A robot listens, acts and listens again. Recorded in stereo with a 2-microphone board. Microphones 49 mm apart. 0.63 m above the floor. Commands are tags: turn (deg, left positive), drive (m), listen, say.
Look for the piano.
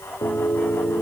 <turn deg="50"/>
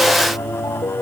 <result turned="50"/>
<turn deg="80"/>
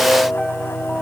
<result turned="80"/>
<turn deg="10"/>
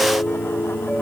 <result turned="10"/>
<say>Found it: a piano, straight ahead.</say>